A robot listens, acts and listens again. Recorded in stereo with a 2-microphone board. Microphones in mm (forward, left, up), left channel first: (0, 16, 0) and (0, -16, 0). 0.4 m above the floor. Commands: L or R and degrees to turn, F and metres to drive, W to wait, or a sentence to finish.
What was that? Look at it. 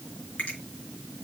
L40
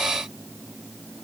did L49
W
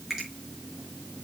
R10
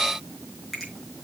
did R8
Found it: a finger snap, straight ahead.